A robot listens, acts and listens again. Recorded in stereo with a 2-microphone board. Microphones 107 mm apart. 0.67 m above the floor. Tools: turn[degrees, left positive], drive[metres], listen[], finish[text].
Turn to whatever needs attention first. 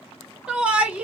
Action: turn[-30]
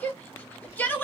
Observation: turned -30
Thought: So it is at 20° left.
Action: turn[20]
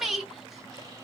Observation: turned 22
Action: finish[Found it: a shout, straight ahead, 1 to 2 m away.]